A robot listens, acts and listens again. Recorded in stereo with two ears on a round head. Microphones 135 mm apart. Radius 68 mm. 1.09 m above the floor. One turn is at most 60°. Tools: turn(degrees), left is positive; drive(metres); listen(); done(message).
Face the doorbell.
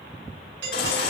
turn(degrees=-60)
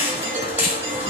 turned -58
listen()
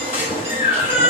listen()
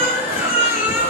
done("I heard a doorbell, but can't make it out now. It was about 15° right or 50° right.")